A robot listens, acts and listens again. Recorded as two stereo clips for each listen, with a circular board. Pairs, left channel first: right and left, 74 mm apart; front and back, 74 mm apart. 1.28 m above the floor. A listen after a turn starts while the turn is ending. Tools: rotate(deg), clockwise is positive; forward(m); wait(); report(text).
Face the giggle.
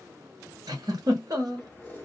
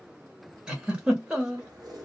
rotate(-105)
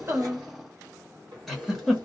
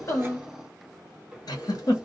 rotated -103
report("Found it: a giggle, straight ahead, 1 to 2 m away.")